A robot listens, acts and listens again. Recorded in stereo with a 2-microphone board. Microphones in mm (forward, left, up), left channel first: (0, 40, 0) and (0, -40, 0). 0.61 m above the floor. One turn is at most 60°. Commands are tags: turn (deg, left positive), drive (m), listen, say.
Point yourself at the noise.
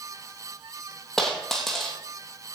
<turn deg="30"/>
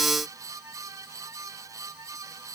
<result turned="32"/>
<listen/>
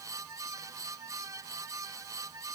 <say>I heard a dropped coin, but can't make it out now. It was about 25° right or 140° left.</say>